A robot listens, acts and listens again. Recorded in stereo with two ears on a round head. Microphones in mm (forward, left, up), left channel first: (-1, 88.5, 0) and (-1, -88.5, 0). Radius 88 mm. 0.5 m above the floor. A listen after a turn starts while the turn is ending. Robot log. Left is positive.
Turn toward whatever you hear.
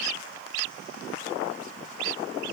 cmd idle
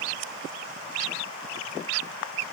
cmd idle
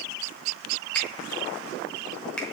cmd yaw +30
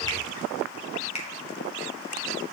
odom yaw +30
note: So it is at 145° left.
cmd yaw +145
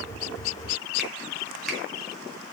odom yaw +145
cmd idle
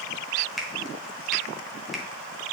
end: Found it: a finger snap, straight ahead.